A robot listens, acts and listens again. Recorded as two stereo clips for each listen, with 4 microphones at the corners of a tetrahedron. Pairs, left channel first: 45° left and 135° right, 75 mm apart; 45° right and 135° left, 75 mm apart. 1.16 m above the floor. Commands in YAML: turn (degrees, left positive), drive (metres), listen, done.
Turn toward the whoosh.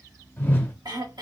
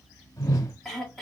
turn: -15
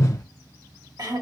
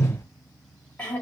done: "Found it: a whoosh, straight ahead."